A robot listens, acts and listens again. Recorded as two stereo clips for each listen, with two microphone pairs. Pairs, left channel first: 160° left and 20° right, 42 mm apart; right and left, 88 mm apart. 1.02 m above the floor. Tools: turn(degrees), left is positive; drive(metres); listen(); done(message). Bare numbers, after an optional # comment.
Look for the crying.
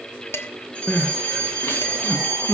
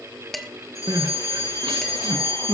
# The crying: 125° left.
turn(125)
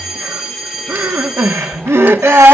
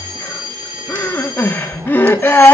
# The crying is now 25° right.
turn(-25)
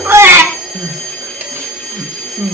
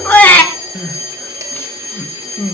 # The crying is now 20° right.
turn(-20)
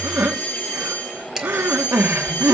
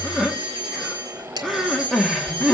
done("Facing the crying.")